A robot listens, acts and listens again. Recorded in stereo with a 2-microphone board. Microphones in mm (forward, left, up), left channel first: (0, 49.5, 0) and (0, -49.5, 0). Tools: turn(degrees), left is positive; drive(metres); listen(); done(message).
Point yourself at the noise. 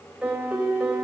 turn(degrees=-30)
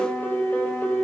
turn(degrees=20)
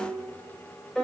done("Facing the piano.")